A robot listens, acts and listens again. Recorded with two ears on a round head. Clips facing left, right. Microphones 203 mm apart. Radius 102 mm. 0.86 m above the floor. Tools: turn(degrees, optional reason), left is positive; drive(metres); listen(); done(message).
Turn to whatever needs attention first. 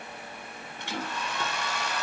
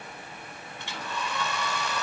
listen()
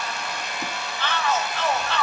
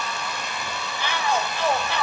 turn(degrees=-30)
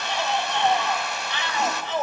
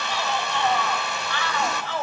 turn(degrees=20, reason="So it is at 20° left.")
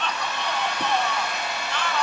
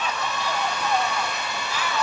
done("Facing the shout.")